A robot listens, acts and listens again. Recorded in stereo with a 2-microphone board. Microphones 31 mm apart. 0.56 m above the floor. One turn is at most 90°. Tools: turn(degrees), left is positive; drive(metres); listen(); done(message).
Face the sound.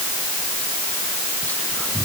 turn(degrees=70)
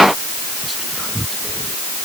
done("Found it: whispering, straight ahead.")